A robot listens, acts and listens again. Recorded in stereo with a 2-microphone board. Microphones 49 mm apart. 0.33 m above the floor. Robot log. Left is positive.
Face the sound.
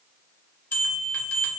note: The bell: about 55° left or 125° left.
cmd yaw +55
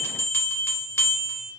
note: So it is at 70° left.
cmd yaw +70
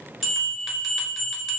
end: Found it: a bell, straight ahead.